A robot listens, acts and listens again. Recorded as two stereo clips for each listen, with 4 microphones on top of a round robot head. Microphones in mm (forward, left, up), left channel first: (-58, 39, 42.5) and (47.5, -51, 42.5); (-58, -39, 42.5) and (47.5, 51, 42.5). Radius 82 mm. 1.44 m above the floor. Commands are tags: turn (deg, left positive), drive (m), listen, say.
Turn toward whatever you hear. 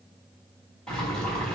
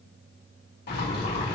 <turn deg="-135"/>
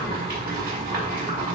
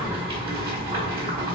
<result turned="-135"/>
<turn deg="-15"/>
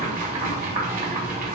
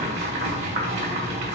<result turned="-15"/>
<say>Found it: boiling, straight ahead, 2 to 4 m away.</say>